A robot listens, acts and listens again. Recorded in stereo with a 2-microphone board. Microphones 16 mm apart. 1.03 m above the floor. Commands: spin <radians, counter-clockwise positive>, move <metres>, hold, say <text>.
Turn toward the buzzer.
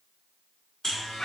spin 0.44
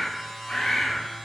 say Found it: a buzzer, straight ahead, 1 to 2 m away.